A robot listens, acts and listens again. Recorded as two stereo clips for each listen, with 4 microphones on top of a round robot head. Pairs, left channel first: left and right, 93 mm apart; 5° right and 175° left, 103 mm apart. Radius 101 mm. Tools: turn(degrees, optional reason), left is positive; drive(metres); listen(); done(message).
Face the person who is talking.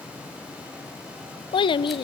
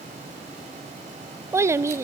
turn(degrees=115, reason="The child speaking: 115° left.")
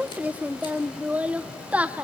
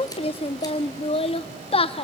turn(degrees=-15, reason="The child speaking is now 15° right.")
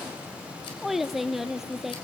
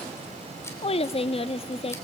done("Facing the child speaking, under 1 m away.")